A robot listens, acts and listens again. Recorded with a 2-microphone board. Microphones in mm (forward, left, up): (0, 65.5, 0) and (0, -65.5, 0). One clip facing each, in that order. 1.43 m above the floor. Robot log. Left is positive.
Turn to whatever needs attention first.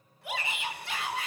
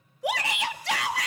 cmd yaw -90
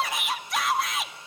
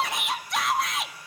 end: Found it: a shout, straight ahead.